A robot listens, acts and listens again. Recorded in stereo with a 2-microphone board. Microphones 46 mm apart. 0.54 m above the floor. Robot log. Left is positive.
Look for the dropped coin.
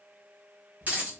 note: The dropped coin: about 35° right or 145° right.
cmd yaw -35
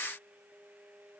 cmd idle
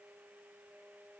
end: I heard a dropped coin, but can't make it out now. It was about straight ahead or 110° right.